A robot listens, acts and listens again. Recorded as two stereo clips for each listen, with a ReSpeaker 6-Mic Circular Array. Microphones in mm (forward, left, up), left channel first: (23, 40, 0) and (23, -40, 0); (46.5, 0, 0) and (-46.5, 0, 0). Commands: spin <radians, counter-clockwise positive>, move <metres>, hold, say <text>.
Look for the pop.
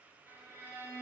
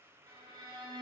hold
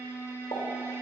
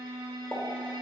spin 1.22
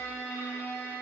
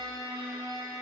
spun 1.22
say Facing where the pop came from. I can't hear it now.